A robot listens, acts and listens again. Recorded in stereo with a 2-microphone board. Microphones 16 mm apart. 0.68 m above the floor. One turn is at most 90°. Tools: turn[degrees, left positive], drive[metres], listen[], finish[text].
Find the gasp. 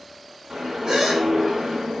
Thought: The gasp: about 55° right or 125° right.
Action: turn[-55]
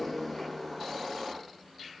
Action: listen[]
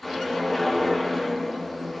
Action: finish[I heard a gasp, but can't make it out now. It was about straight ahead or 70° right.]